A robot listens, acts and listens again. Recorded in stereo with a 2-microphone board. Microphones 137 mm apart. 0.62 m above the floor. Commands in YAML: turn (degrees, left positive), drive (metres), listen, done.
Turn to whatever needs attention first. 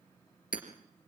listen: true
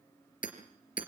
listen: true
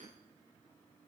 done: "I can't make out anything urgent, only hammering."